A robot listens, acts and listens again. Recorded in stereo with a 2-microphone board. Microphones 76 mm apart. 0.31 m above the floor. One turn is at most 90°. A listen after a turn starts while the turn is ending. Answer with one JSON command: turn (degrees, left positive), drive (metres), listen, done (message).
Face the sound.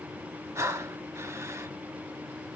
{"turn": -40}
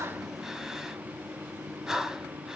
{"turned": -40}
{"done": "Found it: breathing, straight ahead, under 1 m away."}